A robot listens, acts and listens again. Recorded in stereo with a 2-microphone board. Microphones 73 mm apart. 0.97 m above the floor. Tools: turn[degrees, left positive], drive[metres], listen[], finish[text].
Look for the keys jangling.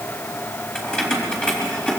Action: turn[30]
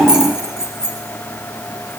Thought: So it is at 10° right.
Action: turn[-10]
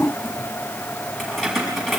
Action: finish[Found it: keys jangling, straight ahead.]